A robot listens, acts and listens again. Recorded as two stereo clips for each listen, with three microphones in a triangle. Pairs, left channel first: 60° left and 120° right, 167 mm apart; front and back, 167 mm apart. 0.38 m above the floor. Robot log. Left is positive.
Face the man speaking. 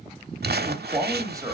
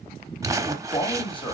note: The man speaking: 55° right.
cmd yaw -55
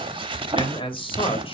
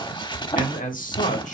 note: The man speaking is now 15° left.
cmd yaw +15
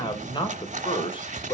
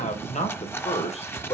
note: The man speaking is now 30° left.
cmd yaw +30
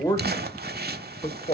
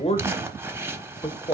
note: The man speaking is now 35° left.
cmd yaw +35
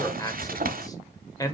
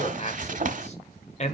end: Facing the man speaking.